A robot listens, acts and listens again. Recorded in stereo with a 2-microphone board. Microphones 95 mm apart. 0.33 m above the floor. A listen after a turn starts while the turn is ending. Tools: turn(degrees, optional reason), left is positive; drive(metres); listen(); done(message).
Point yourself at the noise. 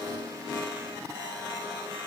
listen()
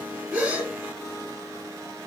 turn(degrees=-20, reason="The gasp: about 20° right or 160° right.")
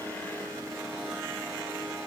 listen()
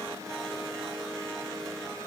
done("I heard a gasp, but can't make it out now. It was about straight ahead or 140° right.")